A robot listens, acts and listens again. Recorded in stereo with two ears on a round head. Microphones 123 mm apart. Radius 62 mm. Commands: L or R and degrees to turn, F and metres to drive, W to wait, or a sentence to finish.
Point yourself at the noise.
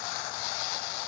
W
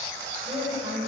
R30
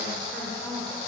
Found it: a woman speaking, straight ahead.